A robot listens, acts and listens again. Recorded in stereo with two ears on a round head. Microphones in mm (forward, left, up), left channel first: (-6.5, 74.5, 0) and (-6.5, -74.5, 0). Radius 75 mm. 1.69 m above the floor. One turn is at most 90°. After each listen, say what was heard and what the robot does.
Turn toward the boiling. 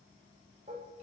Keep listening.
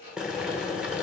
Turn 30° right.
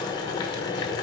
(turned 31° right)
So it is at 25° left. Turn 25° left.
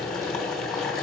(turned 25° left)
Found it: boiling, straight ahead.